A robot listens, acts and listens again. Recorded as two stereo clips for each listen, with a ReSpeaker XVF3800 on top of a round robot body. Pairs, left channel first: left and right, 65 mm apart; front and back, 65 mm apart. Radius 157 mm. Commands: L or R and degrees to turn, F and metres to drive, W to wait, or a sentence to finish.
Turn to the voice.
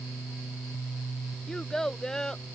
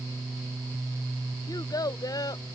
Facing the child speaking.